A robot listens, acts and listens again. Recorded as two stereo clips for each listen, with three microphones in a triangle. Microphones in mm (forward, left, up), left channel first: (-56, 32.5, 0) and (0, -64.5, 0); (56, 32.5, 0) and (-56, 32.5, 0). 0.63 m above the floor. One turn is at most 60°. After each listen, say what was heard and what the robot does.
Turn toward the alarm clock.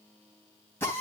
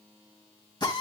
Keep listening.
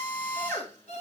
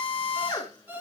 The alarm clock: 105° left. Turn 60° left.
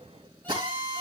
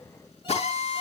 Nothing new. It was at 45° left. Turn 45° left.
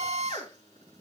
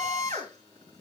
Keep listening.
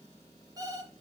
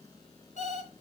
Facing the alarm clock, 2 to 4 m away.